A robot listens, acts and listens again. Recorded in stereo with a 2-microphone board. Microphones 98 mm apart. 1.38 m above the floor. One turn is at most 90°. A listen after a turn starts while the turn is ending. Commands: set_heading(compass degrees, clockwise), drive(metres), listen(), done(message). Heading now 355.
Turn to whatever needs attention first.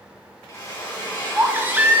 set_heading(15)
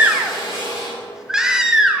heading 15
set_heading(25)
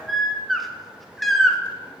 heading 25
done("Found it: a baby crying, straight ahead.")